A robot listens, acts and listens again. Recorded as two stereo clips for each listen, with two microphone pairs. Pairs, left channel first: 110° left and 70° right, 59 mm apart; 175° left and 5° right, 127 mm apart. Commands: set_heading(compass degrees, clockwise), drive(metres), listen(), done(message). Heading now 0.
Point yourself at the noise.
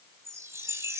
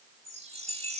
set_heading(35)
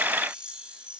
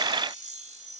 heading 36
done("Found it: a chime, straight ahead, 1 to 2 m away.")